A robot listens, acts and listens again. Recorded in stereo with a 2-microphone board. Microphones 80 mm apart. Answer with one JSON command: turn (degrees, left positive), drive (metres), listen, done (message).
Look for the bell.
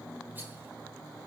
{"listen": true}
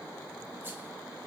{"listen": true}
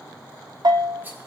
{"turn": -65}
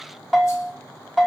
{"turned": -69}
{"done": "Facing the bell."}